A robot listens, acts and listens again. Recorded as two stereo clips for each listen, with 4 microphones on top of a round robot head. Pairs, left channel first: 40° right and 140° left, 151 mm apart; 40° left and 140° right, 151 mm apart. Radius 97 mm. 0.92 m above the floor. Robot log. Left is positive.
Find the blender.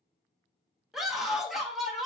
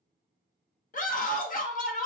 cmd idle
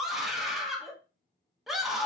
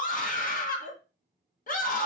cmd idle
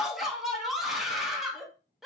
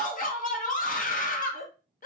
end: I can't make out a blender, only a scream.